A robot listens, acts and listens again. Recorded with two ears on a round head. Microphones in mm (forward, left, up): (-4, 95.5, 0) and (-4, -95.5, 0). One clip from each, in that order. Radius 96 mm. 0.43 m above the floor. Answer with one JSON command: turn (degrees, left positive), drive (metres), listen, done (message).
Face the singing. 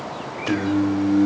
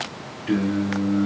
{"turn": 30}
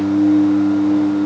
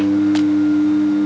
{"turn": -20}
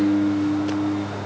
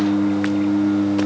{"turn": -30}
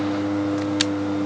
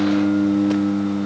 {"turn": -20}
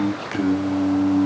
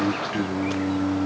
{"turn": -20}
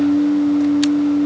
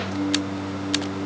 {"done": "Facing the singing, 2 to 4 m away."}